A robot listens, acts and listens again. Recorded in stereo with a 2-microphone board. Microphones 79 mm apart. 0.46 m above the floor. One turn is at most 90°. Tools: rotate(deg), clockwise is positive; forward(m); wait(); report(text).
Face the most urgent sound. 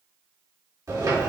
wait()
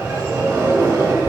wait()
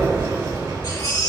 rotate(-60)
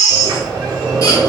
rotate(-45)
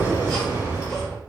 wait()
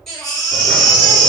report("Facing the baby crying.")